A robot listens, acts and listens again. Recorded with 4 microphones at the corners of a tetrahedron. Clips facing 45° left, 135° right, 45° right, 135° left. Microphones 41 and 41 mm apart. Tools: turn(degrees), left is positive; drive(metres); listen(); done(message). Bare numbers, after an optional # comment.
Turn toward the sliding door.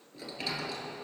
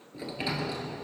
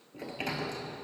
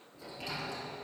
# The sliding door: 65° right.
turn(-65)
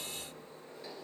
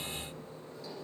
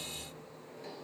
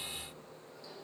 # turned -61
done("Found it: a sliding door, straight ahead.")